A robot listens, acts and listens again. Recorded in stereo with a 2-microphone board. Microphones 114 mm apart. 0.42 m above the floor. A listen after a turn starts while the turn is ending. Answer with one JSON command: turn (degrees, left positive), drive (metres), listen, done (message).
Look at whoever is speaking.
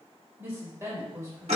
{"turn": -25}
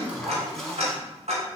{"listen": true}
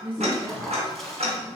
{"turn": -40}
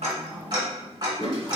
{"listen": true}
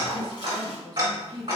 {"turn": 20}
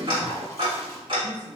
{"listen": true}
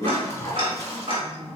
{"listen": true}
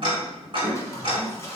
{"done": "I heard a woman speaking from this way, but can't make it out now."}